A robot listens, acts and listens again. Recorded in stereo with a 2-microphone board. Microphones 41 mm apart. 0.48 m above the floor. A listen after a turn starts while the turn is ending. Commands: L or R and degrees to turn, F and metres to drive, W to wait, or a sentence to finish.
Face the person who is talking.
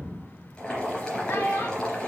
L70
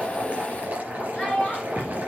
Found it: a child speaking, straight ahead, 2 to 4 m away.